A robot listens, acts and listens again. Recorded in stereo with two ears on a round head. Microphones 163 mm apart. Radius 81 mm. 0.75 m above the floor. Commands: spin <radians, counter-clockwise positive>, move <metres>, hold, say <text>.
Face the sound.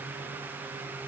hold
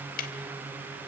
spin 0.87
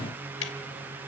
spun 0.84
spin 1.31
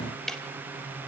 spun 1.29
say Found it: ticking, straight ahead, 1 to 2 m away.